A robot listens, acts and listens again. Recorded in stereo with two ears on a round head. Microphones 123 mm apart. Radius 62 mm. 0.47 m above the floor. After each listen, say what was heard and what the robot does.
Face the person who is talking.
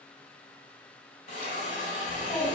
The child speaking: about 20° left or 160° left. Turn 20° left.
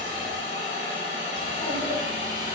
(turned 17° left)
So it is at 145° left. Turn 145° left.
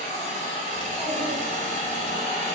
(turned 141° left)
Keep listening.
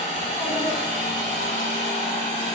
Keep listening.
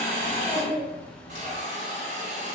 Facing the child speaking.